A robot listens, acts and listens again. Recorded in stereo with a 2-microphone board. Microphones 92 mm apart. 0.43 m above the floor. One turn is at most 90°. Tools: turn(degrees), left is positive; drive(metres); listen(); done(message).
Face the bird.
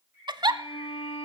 turn(degrees=-25)
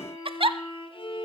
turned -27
listen()
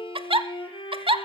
listen()
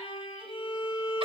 done("I heard a bird, but can't make it out now. It was about straight ahead or 130° right.")